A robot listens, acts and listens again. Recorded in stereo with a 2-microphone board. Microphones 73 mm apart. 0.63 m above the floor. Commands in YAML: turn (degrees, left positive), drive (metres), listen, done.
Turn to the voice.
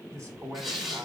turn: -45
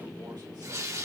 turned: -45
listen: true
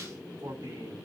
turn: -85
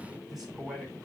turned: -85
done: "Facing the man speaking, over 4 m away."